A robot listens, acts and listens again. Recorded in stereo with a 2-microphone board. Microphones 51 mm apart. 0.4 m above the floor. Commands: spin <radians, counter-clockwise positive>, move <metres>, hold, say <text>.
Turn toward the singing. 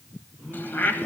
spin -0.52
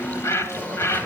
hold
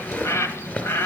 hold
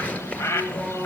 spin 0.61
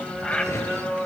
spin -0.17
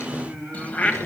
say Found it: singing, straight ahead, over 4 m away.